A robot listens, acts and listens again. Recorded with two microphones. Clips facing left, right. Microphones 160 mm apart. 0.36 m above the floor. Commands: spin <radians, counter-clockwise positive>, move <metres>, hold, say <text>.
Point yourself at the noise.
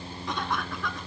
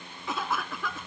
spin -0.52
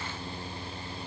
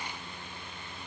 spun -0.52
hold
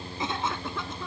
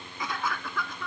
spin 0.44
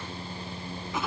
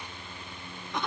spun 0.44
say Found it: a cough, straight ahead.